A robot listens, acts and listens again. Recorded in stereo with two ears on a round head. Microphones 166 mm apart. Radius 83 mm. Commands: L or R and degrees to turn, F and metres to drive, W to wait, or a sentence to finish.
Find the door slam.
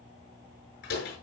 L55
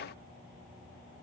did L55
W
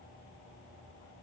I heard a door slam, but can't make it out now. It was about straight ahead or 70° left.